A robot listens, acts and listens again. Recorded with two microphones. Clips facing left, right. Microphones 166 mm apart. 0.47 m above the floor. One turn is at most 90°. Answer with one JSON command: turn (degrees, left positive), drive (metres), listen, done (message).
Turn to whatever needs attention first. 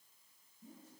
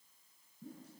{"listen": true}
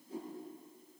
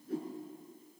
{"listen": true}
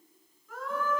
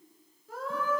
{"turn": -35}
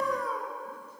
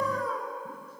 {"done": "Facing the scream."}